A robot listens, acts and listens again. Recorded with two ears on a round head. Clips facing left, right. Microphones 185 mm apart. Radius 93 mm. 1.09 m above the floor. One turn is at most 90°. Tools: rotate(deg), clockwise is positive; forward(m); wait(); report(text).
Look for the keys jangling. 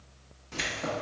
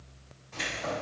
rotate(-90)
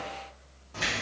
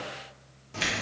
rotate(30)
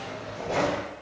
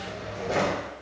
rotate(30)
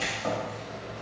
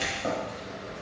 rotate(30)
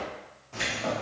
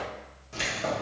rotate(25)
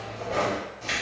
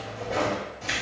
report("Found it: keys jangling, straight ahead, 1 to 2 m away.")